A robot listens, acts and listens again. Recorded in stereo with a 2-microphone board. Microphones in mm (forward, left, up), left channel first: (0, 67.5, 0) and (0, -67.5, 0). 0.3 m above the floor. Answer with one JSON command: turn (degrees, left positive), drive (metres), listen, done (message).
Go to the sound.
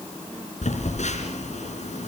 {"turn": 60}
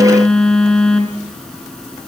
{"drive": 1.0}
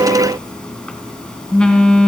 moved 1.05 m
{"drive": 1.0}
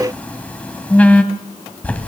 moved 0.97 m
{"turn": 15}
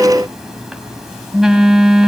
{"drive": 1.0}
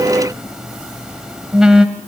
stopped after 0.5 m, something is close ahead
{"turn": -10}
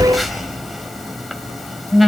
{"done": "Arrived at the phone buzzing, straight ahead."}